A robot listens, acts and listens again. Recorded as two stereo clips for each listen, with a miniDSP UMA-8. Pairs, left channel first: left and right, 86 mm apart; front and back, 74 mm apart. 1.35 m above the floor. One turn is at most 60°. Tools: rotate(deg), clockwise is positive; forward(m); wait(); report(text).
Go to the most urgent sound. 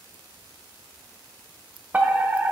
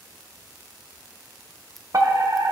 rotate(60)
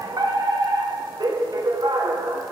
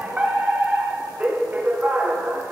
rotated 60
rotate(60)
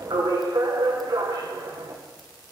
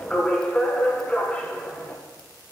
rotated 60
rotate(60)
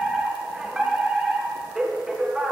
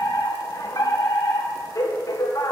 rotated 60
rotate(10)
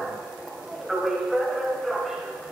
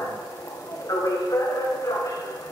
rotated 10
forward(1.0)
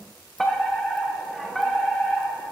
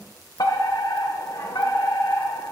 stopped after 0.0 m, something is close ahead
report("Blocked. The fire alarm is further on, straight ahead.")